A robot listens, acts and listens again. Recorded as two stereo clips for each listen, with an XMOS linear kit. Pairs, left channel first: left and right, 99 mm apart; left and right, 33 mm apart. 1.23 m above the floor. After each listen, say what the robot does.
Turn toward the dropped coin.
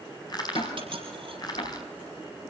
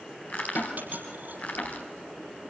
Turn 55° right.
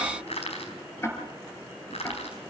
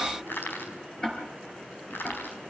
Keep listening.
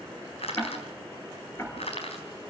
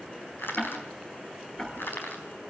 I heard a dropped coin, but can't make it out now. It was about straight ahead or 70° right.